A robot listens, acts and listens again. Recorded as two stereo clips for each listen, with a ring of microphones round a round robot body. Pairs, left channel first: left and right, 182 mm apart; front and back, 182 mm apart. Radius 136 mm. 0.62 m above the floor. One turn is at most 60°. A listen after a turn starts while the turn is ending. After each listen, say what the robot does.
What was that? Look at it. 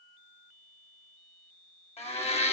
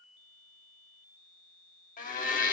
Turn 35° left.
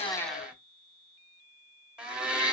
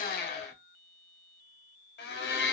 Found it: a blender, straight ahead.